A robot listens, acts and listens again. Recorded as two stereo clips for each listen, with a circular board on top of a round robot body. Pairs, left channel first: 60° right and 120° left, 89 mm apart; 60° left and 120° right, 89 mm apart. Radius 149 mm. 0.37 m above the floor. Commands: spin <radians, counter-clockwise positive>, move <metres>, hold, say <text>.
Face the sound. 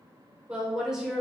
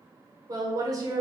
spin -2.71
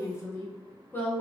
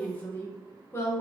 spin 0.17
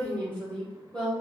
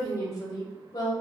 spin 0.35
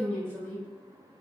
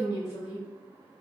spin 0.26
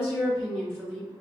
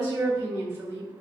say Facing the woman speaking.